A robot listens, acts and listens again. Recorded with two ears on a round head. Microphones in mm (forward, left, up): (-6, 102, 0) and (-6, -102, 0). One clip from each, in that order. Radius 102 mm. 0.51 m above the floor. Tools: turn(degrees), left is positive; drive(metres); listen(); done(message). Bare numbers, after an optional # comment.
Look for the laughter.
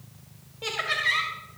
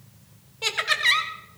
# The laughter: about 55° right or 125° right.
turn(-55)
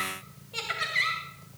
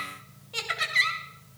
# So it is at 25° right.
turn(-25)
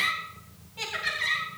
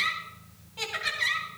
# The laughter is now 15° right.
turn(-15)
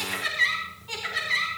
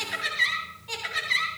# The laughter is now 15° right.
turn(-15)
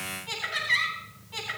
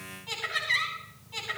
done("Facing the laughter.")